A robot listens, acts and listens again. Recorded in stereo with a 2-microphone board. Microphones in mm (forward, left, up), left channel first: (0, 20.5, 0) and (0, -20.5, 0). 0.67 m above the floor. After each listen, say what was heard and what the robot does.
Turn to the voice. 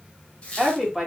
Turn 30° right.
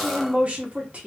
So it is at 145° right. Turn 145° right.
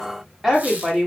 Found it: a woman speaking, straight ahead.